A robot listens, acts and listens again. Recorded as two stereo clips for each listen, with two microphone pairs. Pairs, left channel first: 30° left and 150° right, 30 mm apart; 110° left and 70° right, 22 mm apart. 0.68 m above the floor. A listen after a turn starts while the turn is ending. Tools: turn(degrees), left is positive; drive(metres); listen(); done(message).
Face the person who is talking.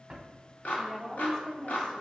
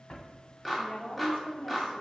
turn(degrees=95)
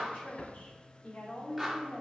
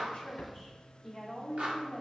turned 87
done("Found it: a woman speaking, straight ahead, 1 to 2 m away.")